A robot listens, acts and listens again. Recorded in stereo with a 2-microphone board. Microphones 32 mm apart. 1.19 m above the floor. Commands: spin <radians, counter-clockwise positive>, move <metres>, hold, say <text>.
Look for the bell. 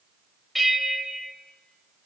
spin 0.52
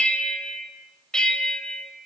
spin 2.62
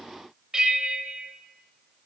spin -0.35
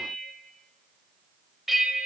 spin -0.17
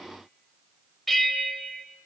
say Facing the bell.